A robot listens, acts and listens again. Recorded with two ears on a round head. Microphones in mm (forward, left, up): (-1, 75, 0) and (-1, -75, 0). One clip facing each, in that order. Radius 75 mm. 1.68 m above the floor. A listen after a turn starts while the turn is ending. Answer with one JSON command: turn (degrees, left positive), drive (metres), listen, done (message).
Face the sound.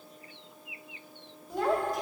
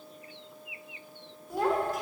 {"turn": -30}
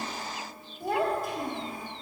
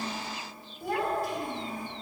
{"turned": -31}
{"turn": 40}
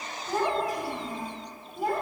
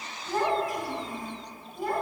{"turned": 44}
{"done": "Facing the child speaking."}